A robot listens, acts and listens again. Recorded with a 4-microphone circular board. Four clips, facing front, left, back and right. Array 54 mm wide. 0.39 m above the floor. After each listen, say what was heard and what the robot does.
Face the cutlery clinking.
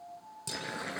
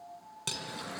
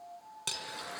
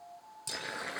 The cutlery clinking: 140° left. Turn 140° left.
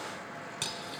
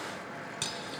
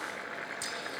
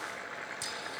The cutlery clinking is now 35° left. Turn 35° left.
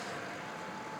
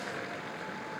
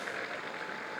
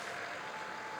Keep listening.
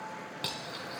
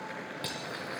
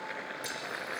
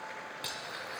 Found it: cutlery clinking, straight ahead, 2 to 4 m away.